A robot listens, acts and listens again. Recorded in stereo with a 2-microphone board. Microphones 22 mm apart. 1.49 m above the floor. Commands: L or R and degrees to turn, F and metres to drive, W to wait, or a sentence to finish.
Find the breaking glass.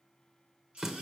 W
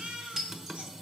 R25
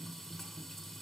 W
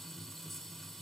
I heard breaking glass, but can't make it out now. It was about straight ahead or 130° right.